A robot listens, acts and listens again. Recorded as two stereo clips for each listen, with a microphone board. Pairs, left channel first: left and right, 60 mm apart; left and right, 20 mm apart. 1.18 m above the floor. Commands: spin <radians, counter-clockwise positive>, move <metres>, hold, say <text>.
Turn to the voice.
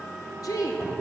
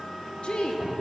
spin 1.13
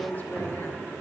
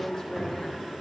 spin 0.61
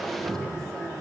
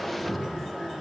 hold
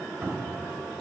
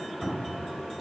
hold
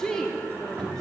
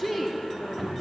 spin 0.17
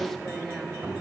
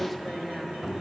say Found it: a woman speaking, straight ahead, 1 to 2 m away.